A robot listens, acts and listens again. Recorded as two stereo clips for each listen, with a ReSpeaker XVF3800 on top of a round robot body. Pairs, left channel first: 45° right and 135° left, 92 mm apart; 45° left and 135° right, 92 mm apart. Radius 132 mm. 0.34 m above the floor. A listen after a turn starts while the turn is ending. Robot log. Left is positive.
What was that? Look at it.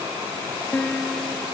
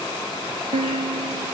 note: The piano: 125° right.
cmd yaw -125
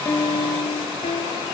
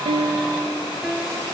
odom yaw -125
note: The piano is now 50° right.
cmd yaw -50
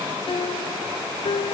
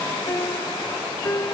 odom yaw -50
note: The piano is now 15° right.
cmd yaw -15
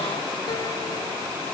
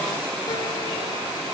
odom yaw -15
cmd idle
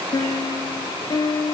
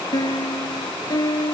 end: Facing the piano.